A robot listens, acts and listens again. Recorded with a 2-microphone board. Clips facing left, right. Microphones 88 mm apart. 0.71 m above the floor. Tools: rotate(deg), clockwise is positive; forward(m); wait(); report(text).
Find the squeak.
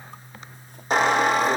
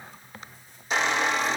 rotate(-50)
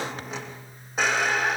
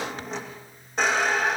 report("Facing the squeak.")